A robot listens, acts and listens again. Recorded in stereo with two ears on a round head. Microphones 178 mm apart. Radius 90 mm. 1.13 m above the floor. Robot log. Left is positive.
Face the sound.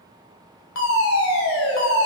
cmd yaw +90
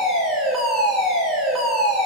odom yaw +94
end: Facing the fire alarm.